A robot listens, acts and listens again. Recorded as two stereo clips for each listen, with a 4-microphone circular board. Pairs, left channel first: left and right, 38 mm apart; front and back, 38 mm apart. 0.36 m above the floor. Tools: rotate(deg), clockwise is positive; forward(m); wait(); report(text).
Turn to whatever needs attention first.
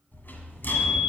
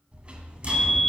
rotate(-50)
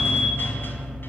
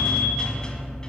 wait()
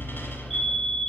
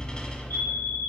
report("Facing the fire alarm.")